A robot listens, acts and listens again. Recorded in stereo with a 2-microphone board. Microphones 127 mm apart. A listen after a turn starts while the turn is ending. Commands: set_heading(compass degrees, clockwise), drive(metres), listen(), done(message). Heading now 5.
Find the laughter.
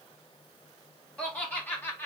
set_heading(345)
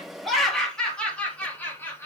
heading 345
set_heading(325)
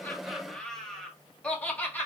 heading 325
set_heading(295)
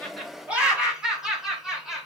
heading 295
done("Found it: laughter, straight ahead.")